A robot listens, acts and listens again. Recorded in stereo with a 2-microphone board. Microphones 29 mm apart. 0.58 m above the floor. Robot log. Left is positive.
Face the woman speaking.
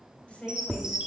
note: The woman speaking: about 50° left or 130° left.
cmd yaw +50
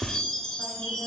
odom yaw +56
cmd idle
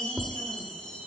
cmd idle
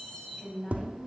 note: So it is at 10° left.
cmd yaw +10
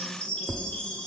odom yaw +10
cmd idle
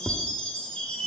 cmd idle
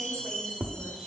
end: I heard a woman speaking from this way, but can't make it out now.